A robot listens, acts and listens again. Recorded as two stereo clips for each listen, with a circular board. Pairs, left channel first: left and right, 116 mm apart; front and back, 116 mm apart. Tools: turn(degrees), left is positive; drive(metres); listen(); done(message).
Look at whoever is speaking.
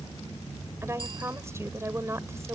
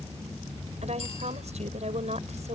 turn(degrees=-155)
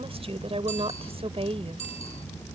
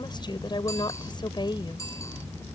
turn(degrees=-50)
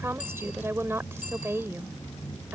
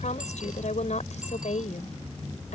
turn(degrees=-20)
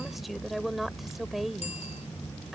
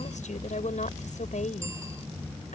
done("Facing the woman speaking.")